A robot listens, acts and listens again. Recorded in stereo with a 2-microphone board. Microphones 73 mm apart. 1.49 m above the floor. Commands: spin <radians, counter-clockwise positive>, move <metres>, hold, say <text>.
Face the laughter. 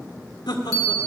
spin 1.22
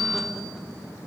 hold
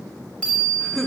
say Facing the laughter, 1 to 2 m away.